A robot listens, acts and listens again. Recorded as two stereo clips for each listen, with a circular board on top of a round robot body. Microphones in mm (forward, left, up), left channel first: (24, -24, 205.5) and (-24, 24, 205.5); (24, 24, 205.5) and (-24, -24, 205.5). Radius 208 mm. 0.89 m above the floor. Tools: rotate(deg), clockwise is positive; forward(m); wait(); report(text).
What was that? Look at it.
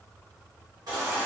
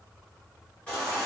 rotate(-120)
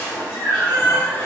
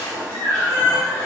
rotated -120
rotate(15)
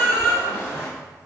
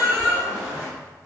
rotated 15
report("Facing the baby crying, 1 to 2 m away.")